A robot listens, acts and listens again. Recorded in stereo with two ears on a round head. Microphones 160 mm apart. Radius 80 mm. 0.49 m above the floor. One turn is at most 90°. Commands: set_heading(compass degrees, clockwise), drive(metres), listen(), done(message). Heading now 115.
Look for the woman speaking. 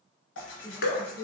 set_heading(130)
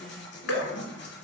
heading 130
listen()
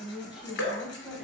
done("Facing the woman speaking.")